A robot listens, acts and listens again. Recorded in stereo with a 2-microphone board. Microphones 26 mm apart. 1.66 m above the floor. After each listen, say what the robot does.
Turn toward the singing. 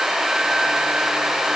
Keep listening.
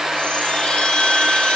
Keep listening.
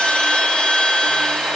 I can't make out singing, only a chime.